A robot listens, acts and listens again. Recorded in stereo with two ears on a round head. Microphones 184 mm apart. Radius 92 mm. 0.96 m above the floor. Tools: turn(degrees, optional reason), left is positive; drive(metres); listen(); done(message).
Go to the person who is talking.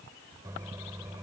listen()
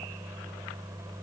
listen()
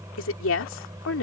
turn(degrees=70, reason="The woman speaking: about 70° left or 110° left.")
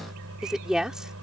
drive(metres=1.0)
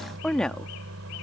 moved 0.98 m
drive(metres=1.0)
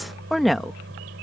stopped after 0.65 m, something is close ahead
done("Arrived at the woman speaking, straight ahead.")